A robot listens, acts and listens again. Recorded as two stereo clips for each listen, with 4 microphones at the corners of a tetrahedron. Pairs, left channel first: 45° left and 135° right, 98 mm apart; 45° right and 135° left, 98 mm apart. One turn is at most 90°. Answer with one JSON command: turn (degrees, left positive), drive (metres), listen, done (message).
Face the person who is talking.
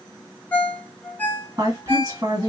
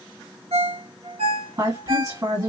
{"turn": 90}
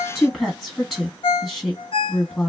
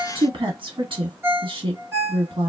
{"turn": 90}
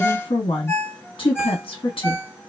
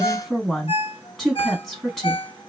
{"turn": 40}
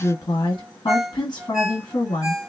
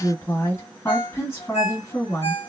{"turn": 10}
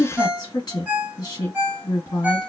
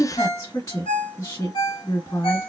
{"done": "Facing the woman speaking, 1 to 2 m away."}